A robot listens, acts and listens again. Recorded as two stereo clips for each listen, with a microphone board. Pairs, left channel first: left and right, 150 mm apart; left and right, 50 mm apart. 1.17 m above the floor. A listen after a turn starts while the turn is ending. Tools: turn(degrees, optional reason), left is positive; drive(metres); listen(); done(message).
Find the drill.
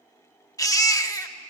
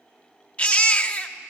listen()
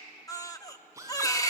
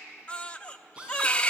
turn(degrees=-20, reason="The drill: about 20° right or 160° right.")
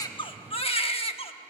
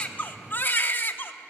listen()
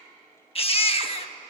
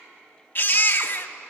listen()
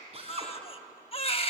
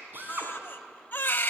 turn(degrees=-135, reason="So it is at 135° right.")
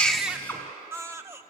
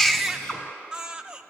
turn(degrees=15, reason="The drill is now 15° left.")
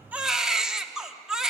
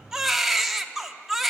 listen()
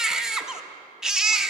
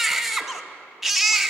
listen()
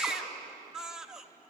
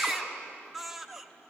done("I heard a drill from this way, but can't make it out now.")